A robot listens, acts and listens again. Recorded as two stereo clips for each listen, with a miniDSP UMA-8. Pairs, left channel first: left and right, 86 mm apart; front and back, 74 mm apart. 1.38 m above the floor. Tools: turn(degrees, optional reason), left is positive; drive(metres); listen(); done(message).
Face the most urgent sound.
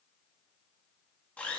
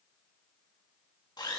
listen()
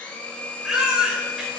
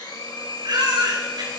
turn(degrees=-175, reason="The baby crying: 175° right.")
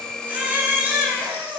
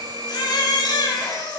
turn(degrees=-20, reason="The baby crying is now 20° right.")
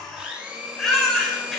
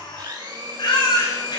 done("Facing the baby crying.")